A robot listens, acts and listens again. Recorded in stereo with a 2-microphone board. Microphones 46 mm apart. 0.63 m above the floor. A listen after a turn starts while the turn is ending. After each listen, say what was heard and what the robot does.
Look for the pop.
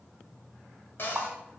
The pop: about 45° right or 135° right. Turn 45° right.
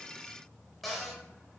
Keep listening.
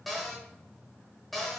I heard a pop, but can't make it out now. It was about straight ahead or 90° right.